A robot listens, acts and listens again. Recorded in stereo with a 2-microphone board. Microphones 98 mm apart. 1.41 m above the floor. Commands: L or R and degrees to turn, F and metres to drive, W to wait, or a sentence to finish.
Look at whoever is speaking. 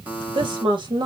R50
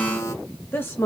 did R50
L30
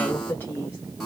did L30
L25
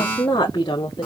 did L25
L45
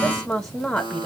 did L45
Facing the woman speaking.